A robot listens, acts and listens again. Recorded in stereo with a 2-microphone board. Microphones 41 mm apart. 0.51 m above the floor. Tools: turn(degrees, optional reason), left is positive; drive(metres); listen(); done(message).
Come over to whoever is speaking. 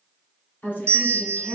turn(degrees=50, reason="The woman speaking: about 50° left or 130° left.")
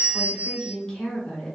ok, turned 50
turn(degrees=15, reason="So it is at 15° left.")
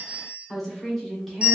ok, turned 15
drive(metres=1.0)
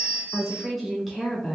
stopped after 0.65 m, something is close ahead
done("I am next to the woman speaking.")